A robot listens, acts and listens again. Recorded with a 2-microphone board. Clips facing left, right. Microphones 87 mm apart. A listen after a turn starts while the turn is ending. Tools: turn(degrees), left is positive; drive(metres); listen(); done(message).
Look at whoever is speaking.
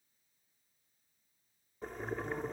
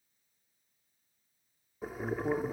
turn(degrees=-45)
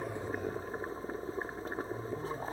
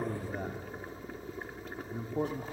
turn(degrees=-85)
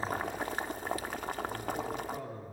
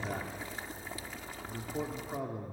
turn(degrees=-20)
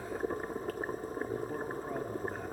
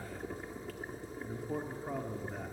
done("Facing the man speaking, 1 to 2 m away.")